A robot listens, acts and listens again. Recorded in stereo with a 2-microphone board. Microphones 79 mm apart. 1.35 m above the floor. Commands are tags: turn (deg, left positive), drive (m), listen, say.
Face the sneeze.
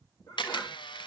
<turn deg="55"/>
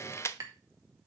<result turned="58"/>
<listen/>
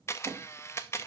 <say>I heard a sneeze, but can't make it out now. It was about straight ahead or 65° left.</say>